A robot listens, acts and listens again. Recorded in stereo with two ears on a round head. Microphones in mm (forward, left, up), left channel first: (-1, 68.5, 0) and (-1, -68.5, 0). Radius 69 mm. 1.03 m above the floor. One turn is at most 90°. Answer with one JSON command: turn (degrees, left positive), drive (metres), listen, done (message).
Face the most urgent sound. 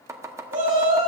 {"turn": -50}
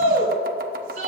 {"turn": -75}
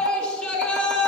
{"done": "Facing the shout."}